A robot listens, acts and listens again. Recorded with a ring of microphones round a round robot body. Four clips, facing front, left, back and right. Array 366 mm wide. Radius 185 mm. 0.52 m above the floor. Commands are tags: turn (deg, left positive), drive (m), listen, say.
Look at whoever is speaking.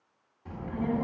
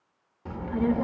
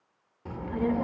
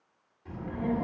<turn deg="125"/>
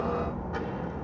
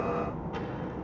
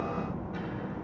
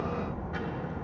<turn deg="20"/>
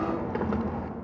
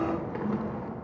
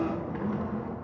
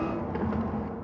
<say>Facing the child speaking.</say>